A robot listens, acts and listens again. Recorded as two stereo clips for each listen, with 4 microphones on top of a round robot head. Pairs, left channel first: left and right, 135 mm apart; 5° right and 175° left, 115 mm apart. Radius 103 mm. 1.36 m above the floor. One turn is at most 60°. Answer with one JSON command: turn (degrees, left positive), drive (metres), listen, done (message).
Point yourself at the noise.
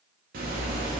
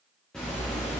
{"turn": -60}
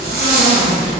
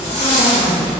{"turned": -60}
{"turn": -60}
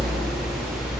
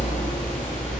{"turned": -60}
{"turn": -10}
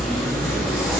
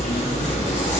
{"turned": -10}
{"done": "Found it: a zipper, straight ahead."}